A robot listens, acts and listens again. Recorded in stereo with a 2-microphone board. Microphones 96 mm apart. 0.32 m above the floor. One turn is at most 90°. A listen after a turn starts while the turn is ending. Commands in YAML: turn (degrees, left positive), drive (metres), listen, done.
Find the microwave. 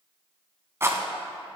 listen: true
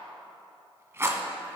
listen: true
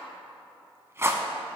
done: "I can't make out a microwave to turn to."